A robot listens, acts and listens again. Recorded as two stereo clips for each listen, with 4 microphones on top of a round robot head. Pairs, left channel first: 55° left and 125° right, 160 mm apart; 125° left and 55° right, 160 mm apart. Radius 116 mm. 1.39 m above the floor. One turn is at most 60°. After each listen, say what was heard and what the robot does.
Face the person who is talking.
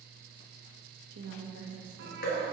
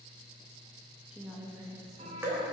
The woman speaking: 125° right. Turn 60° right.
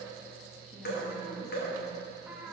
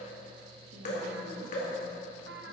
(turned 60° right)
Nothing new. It was at 65° right. Turn 60° right.
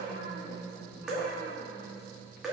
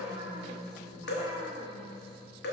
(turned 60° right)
The woman speaking is now 40° left. Turn 40° left.
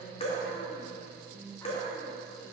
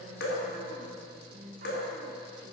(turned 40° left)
Facing the woman speaking, 2 to 4 m away.